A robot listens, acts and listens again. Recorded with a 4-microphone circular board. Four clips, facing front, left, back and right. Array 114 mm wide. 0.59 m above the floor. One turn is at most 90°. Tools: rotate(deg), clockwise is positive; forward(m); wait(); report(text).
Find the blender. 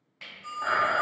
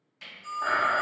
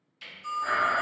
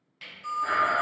rotate(-45)
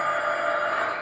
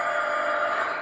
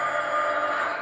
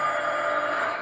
rotate(-20)
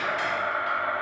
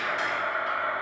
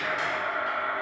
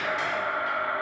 report("Facing the blender.")